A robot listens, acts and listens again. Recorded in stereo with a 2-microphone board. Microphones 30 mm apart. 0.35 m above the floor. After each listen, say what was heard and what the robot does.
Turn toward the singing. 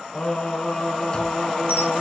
The singing: about 40° left or 140° left. Turn 40° left.
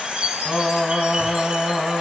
So it is at 25° left. Turn 25° left.
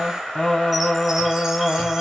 The singing is now 35° left. Turn 35° left.
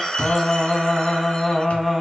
Found it: singing, straight ahead.